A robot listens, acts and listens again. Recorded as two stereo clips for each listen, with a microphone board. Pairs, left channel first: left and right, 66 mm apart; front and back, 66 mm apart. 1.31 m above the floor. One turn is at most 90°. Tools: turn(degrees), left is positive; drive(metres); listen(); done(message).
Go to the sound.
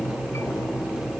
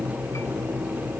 listen()
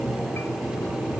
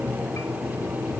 listen()
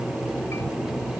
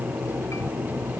done("I can't make out anything to turn to.")